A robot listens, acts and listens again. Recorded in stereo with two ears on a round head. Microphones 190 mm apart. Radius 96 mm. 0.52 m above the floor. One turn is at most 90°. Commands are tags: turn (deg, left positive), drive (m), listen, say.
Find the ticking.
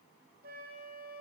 <listen/>
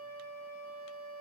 <listen/>
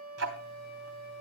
<turn deg="-70"/>
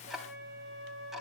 <say>Found it: ticking, straight ahead.</say>